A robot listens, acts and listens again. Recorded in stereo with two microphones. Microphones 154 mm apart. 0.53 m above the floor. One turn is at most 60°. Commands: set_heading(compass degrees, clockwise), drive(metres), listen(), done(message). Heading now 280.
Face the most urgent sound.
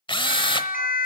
set_heading(220)
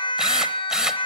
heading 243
set_heading(208)
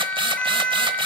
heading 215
done("Facing the siren, over 4 m away.")